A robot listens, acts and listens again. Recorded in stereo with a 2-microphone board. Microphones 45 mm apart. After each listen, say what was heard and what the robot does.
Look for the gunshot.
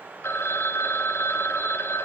Keep listening.
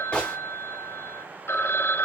The gunshot: about 20° left or 160° left. Turn 20° left.
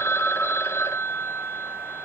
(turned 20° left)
Keep listening.
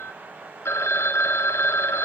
I heard a gunshot, but can't make it out now. It was about straight ahead or 140° left.